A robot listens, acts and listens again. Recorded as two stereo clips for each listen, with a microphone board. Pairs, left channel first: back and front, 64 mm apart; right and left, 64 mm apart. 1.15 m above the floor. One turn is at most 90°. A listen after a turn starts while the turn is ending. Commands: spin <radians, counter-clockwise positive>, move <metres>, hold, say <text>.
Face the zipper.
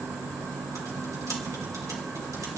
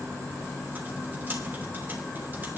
hold
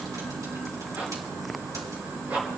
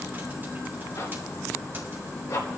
spin -1.13
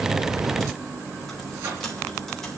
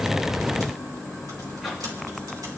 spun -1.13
hold
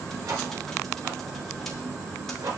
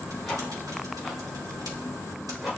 say Found it: a zipper, straight ahead.